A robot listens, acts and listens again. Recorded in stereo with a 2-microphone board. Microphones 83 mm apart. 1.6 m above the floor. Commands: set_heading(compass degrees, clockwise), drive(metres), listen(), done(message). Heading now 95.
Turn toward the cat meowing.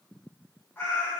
set_heading(75)
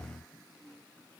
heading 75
listen()
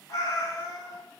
set_heading(300)
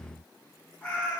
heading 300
set_heading(280)
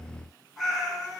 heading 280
done("Facing the cat meowing, 1 to 2 m away.")